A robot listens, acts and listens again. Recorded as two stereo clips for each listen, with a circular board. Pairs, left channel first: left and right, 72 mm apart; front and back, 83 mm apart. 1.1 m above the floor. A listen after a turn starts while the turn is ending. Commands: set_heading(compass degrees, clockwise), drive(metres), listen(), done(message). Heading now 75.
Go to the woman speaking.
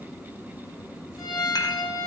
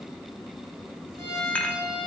listen()
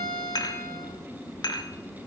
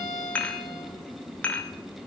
listen()
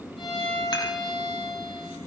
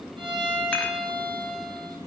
done("I can't make out a woman speaking to turn to.")